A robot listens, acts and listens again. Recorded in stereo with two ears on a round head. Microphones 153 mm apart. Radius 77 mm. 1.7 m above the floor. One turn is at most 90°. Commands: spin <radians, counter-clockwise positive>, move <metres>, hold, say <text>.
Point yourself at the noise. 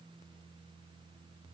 hold
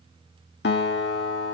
spin 1.22
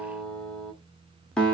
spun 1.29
say Found it: a guitar, straight ahead, under 1 m away.